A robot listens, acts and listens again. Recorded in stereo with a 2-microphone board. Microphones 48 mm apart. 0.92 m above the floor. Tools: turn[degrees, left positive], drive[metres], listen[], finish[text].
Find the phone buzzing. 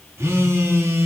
Thought: The phone buzzing: about 65° right or 115° right.
Action: turn[-65]
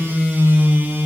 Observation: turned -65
Thought: So it is at 50° right.
Action: turn[-50]
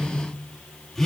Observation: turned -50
Action: finish[Found it: a phone buzzing, straight ahead.]